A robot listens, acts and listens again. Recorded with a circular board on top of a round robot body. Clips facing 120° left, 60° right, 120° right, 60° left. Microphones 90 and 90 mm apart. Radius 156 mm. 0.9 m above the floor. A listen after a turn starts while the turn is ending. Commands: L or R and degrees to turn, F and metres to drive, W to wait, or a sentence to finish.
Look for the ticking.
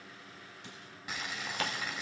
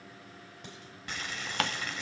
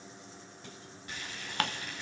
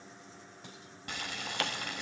R75
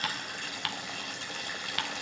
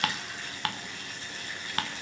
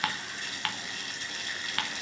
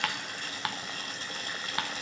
R10
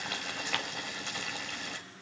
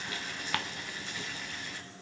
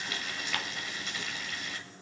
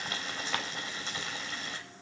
W
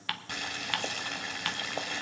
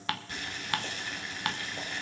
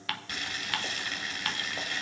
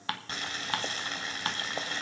Found it: ticking, straight ahead.